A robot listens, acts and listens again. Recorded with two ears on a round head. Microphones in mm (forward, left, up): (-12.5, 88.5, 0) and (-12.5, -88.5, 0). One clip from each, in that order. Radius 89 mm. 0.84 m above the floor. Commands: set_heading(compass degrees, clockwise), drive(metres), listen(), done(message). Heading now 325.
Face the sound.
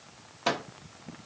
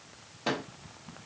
set_heading(295)
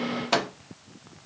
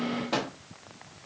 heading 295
set_heading(180)
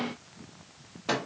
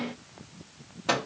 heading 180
set_heading(190)
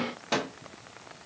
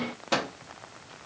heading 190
done("Found it: a microwave, straight ahead.")